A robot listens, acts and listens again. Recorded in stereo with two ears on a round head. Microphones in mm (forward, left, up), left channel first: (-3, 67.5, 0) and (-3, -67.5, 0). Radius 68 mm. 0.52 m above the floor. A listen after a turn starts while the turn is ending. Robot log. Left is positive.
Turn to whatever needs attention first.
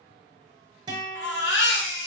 cmd yaw +90
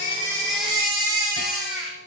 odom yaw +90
end: Facing the baby crying, 1 to 2 m away.